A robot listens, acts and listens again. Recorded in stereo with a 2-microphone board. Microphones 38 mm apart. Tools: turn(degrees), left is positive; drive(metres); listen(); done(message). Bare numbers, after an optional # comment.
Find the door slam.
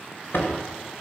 # The door slam: about 65° left or 115° left.
turn(65)
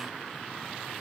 listen()
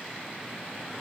done("I heard a door slam, but can't make it out now. It was about straight ahead or 50° left.")